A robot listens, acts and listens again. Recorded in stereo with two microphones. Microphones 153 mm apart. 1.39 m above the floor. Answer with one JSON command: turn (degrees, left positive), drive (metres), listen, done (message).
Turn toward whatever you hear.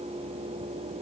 {"listen": true}
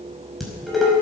{"turn": 30}
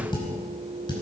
{"turn": 150}
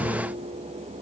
{"listen": true}
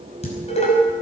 {"turn": 45}
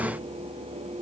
{"listen": true}
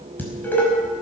{"turn": 10}
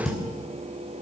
{"done": "Facing the dishes clattering."}